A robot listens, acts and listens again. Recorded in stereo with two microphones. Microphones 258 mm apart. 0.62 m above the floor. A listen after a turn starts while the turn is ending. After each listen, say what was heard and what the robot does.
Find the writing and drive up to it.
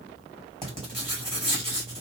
The writing: about 20° right or 160° right. Turn 20° right.
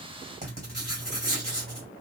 So it is at 135° right. Turn 135° right.
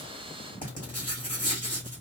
The writing is now 35° left. Turn 35° left.
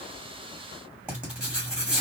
Drive 1.0 m forward.
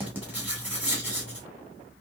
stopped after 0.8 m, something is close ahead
The writing is now 10° right. Turn 10° right.
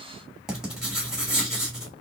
Arrived at the writing, straight ahead.